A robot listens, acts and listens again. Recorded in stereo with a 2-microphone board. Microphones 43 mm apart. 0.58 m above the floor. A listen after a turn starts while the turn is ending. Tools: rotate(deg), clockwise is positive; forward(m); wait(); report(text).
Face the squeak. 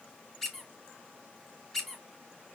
rotate(-30)
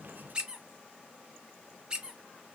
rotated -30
rotate(20)
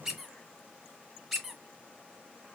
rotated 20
report("Facing the squeak, 1 to 2 m away.")